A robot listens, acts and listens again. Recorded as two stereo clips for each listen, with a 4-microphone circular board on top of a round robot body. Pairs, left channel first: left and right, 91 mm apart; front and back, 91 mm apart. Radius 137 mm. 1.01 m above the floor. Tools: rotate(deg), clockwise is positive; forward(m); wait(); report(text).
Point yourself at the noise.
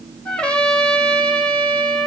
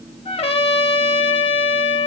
rotate(-10)
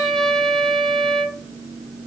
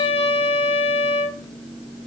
report("Found it: a trumpet, straight ahead, 1 to 2 m away.")